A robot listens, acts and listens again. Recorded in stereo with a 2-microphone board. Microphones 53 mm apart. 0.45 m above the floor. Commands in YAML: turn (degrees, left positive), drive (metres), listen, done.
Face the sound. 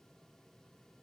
listen: true
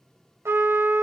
turn: -50
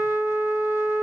turn: -70
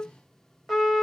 done: "Found it: a trumpet, straight ahead, 1 to 2 m away."